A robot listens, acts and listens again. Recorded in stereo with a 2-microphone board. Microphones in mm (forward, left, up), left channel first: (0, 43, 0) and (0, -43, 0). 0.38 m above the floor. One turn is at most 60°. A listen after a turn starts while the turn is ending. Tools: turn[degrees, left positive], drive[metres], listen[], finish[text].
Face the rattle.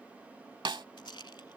Thought: The rattle: about 65° left or 115° left.
Action: turn[60]
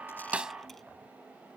Action: listen[]
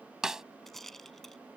Action: finish[Found it: a rattle, straight ahead.]